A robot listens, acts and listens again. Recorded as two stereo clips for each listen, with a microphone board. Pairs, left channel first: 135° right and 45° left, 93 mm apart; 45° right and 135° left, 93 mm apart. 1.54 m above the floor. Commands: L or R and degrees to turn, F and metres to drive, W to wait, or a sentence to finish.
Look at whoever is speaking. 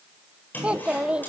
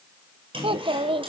L125
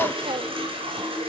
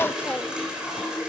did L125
W
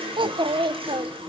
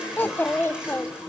L25
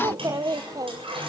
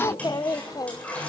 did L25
Facing the child speaking.